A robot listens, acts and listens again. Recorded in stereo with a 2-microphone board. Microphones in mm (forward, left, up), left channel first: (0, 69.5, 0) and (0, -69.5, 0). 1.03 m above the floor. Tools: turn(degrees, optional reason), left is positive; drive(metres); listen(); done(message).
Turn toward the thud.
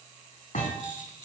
turn(degrees=70, reason="The thud: about 70° left or 110° left.")
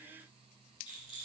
listen()
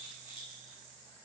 done("I heard a thud, but can't make it out now. It was about straight ahead or 40° left.")